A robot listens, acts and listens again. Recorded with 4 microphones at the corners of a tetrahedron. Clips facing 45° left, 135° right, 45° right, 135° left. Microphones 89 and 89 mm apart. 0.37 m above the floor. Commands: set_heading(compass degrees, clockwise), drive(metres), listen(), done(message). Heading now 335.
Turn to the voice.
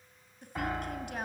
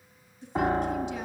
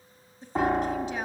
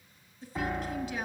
set_heading(315)
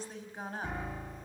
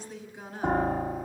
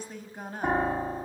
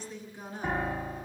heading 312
done("Facing the woman speaking, over 4 m away.")